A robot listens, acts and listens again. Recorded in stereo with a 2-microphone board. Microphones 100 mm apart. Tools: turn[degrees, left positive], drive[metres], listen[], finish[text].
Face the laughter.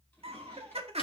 Action: turn[-90]
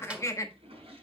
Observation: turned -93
Thought: So it is at 35° left.
Action: turn[35]
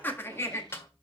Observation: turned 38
Thought: The laughter is now 30° left.
Action: turn[30]
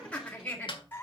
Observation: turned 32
Thought: The laughter is now 20° left.
Action: turn[20]
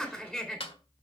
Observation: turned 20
Action: finish[Facing the laughter, 2 to 4 m away.]